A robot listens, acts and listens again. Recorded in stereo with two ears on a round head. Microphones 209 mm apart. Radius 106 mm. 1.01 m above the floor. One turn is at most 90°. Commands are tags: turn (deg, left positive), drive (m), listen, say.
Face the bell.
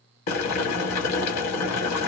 <listen/>
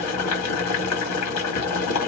<listen/>
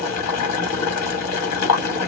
<say>I can't make out a bell to turn to.</say>